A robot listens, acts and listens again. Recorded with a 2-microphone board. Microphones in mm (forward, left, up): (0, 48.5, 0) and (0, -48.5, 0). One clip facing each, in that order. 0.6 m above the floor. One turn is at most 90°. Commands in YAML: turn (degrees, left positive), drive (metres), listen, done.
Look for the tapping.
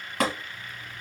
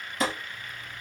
turn: 90
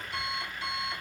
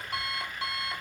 listen: true
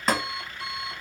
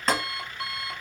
done: "Facing the tapping."